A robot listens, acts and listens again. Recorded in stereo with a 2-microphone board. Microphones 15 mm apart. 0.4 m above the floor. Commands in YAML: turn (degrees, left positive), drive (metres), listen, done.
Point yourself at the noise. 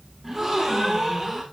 turn: -25
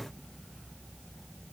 listen: true
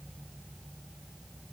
done: "I heard a gasp, but can't make it out now. It was about straight ahead or 130° right."